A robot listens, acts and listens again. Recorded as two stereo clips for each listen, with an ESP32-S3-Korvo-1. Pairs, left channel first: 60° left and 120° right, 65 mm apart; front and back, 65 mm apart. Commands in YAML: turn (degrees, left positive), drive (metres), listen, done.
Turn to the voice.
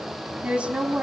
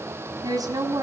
turn: 165
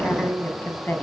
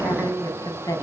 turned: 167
done: "Found it: a woman speaking, straight ahead."